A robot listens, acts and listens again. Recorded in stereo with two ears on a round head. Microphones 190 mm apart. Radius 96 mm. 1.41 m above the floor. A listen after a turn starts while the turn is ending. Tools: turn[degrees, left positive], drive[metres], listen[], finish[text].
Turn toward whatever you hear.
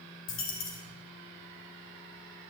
Thought: The dropped coin: about 65° left or 115° left.
Action: turn[65]
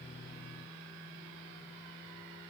Action: listen[]
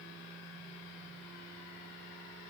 Action: finish[I heard a dropped coin, but can't make it out now. It was about straight ahead or 50° left.]